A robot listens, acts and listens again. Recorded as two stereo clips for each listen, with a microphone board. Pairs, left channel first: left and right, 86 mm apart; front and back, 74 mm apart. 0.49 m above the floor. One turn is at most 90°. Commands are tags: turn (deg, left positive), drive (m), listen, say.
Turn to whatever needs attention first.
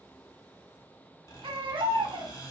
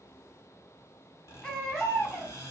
<turn deg="-75"/>
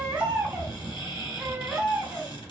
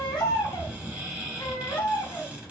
<turn deg="-15"/>
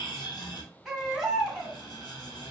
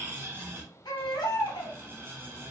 <say>Found it: a baby crying, straight ahead, under 1 m away.</say>